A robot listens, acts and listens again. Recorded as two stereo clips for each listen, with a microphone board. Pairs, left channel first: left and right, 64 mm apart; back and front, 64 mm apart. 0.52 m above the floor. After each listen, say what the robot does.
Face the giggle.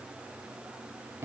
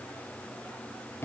Keep listening.
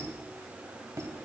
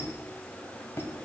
Keep listening.
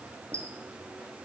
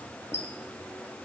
I can't make out a giggle, only a squeak.